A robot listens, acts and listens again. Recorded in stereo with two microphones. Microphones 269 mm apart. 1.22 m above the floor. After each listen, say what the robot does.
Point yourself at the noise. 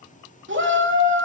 Turn 45° right.
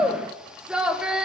Found it: a shout, straight ahead, 2 to 4 m away.